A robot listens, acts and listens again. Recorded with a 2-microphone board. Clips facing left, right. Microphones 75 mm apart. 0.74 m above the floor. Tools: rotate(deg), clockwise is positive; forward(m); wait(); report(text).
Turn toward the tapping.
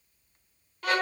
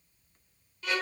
wait()
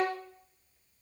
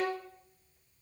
wait()
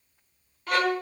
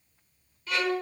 report("I can't make out tapping to turn to.")